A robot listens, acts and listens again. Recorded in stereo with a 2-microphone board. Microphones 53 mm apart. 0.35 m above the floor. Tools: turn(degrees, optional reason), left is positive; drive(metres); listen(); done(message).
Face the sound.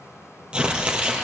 turn(degrees=-20, reason="The tearing paper: about 20° right or 160° right.")
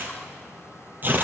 turn(degrees=-140, reason="So it is at 140° right.")
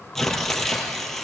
done("Facing the tearing paper, 2 to 4 m away.")